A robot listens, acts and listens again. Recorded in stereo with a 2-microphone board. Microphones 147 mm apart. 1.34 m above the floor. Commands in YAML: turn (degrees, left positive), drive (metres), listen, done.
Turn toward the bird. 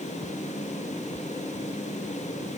listen: true
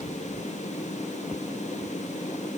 listen: true
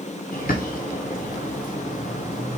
turn: 90
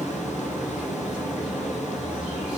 done: "Facing the bird."